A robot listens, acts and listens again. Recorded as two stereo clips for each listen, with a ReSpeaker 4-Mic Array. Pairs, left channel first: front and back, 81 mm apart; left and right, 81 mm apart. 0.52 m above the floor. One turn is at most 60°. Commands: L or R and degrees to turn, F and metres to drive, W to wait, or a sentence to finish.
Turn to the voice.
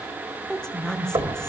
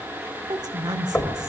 R60
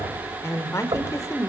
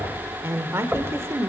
R40
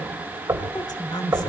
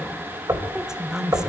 R10
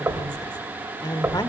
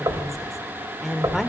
Facing the woman speaking.